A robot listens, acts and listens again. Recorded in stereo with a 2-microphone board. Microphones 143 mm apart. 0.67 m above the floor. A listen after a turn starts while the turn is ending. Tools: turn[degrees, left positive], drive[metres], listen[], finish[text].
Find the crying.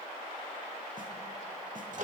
Action: listen[]
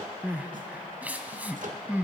Action: turn[-30]
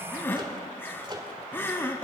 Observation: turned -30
Thought: So it is at 15° left.
Action: turn[15]
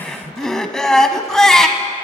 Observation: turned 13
Action: finish[Facing the crying.]